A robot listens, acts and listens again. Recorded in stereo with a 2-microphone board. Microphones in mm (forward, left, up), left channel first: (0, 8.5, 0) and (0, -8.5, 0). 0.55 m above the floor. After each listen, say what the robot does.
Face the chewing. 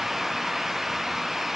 Keep listening.
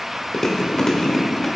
Turn 25° left.
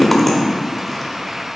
Found it: chewing, straight ahead, 1 to 2 m away.